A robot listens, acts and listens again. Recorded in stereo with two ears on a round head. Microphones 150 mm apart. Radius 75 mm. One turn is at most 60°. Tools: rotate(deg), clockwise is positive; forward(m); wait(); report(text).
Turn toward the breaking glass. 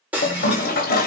rotate(30)
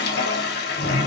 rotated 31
wait()
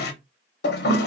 report("I heard breaking glass, but can't make it out now. It was about 20° left or 140° right.")